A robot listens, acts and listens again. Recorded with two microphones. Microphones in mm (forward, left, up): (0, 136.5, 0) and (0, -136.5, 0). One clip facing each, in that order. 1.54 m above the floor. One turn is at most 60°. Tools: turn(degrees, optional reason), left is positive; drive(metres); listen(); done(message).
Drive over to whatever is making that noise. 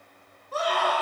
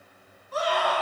turn(degrees=55, reason="The scream: about 55° left or 125° left.")
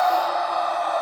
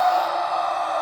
turn(degrees=60, reason="So it is at 65° left.")
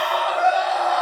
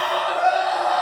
drive(metres=1.0)
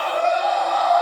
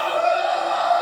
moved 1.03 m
turn(degrees=-10, reason="The scream is now 10° right.")
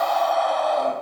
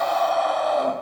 drive(metres=1.0)
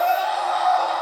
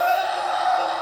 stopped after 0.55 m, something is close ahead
turn(degrees=-10, reason="The scream is now 10° right.")
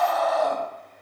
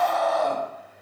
done("I am next to the scream.")